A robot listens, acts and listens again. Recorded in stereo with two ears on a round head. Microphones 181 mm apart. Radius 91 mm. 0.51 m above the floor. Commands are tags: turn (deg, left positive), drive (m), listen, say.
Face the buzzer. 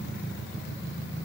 <listen/>
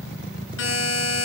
<turn deg="70"/>
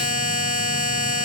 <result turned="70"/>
<turn deg="40"/>
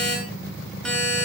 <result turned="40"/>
<say>Facing the buzzer.</say>